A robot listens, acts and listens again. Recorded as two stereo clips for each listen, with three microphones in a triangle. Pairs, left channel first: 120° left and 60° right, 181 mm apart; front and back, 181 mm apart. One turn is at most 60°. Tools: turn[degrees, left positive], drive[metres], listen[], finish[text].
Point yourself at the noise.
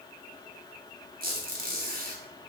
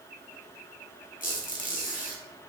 Thought: The squeak: 35° right.
Action: turn[-35]
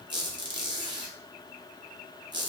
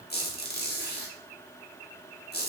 Action: finish[Found it: a squeak, straight ahead.]